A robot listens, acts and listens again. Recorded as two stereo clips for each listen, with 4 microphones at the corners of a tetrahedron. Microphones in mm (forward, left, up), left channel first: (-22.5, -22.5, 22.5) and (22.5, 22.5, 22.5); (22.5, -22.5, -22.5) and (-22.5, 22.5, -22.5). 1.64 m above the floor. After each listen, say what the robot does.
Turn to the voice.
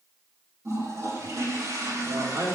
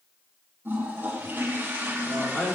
Turn 20° left.
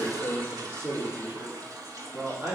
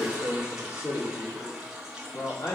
Turn 20° right.
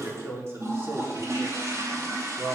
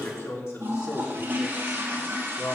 Turn 10° right.
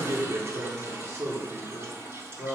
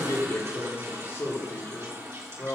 Found it: a man speaking, straight ahead, over 4 m away.